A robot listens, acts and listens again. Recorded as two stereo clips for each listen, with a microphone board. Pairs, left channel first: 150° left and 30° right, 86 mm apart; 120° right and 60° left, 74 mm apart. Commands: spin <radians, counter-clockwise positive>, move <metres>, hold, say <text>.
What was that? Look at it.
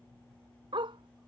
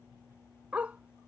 spin -0.26
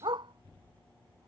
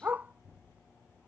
say Facing the dog barking.